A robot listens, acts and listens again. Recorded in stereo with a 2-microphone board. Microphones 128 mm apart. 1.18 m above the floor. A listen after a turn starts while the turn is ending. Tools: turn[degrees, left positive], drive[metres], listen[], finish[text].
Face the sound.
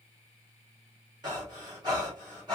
Thought: The breathing: about 35° right or 145° right.
Action: turn[-35]
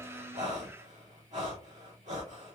Thought: So it is at 110° right.
Action: turn[-110]
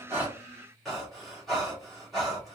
Action: finish[Found it: breathing, straight ahead.]